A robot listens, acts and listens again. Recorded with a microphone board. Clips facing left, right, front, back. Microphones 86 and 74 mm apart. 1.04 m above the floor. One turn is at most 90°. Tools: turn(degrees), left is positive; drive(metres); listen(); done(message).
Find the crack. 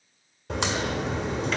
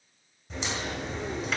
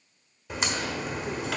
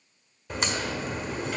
turn(degrees=90)
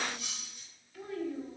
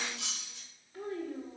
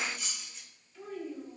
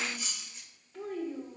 done("I heard a crack from this way, but can't make it out now.")